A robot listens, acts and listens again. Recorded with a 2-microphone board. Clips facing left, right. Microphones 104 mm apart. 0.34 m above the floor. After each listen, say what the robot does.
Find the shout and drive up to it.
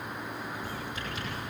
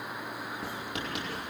Keep listening.
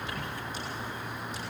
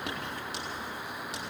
Keep listening.
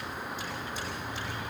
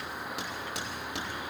I can't make out a shout to turn to.